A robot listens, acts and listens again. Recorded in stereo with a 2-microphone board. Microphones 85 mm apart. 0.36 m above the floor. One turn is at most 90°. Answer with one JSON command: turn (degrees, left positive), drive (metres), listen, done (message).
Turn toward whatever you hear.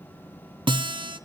{"turn": -75}
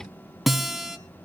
{"done": "Found it: a guitar, straight ahead."}